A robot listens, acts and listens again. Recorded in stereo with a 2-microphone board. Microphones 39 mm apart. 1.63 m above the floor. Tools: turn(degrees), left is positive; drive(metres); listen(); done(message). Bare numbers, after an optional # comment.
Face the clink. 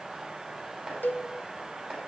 listen()
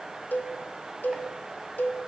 listen()
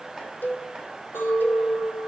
# The clink: about 75° left or 105° left.
turn(75)
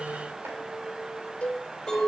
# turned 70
done("Facing the clink, over 4 m away.")